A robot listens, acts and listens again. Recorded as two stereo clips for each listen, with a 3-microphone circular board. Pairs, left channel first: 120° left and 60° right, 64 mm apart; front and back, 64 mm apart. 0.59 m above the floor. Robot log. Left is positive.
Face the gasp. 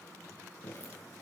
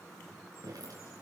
cmd idle
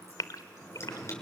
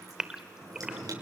note: The gasp: 100° left.
cmd yaw +100
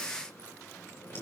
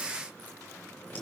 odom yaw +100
end: I heard a gasp from this way, but can't make it out now.